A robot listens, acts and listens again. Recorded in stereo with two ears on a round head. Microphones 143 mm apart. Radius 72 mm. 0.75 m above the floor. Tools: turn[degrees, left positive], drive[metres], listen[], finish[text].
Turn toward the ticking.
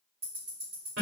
Thought: The ticking: about 35° right or 145° right.
Action: turn[-35]
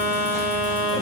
Action: listen[]
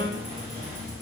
Action: listen[]
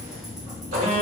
Action: finish[I heard ticking, but can't make it out now. It was about straight ahead or 110° right.]